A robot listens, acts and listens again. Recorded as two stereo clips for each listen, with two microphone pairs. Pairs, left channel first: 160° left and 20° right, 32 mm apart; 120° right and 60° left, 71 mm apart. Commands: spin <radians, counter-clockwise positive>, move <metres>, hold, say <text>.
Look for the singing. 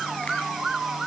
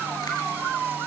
hold
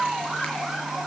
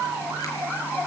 hold
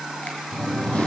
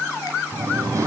spin 1.92
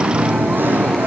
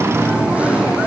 spin -0.17
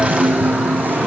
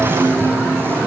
say Found it: singing, straight ahead, over 4 m away.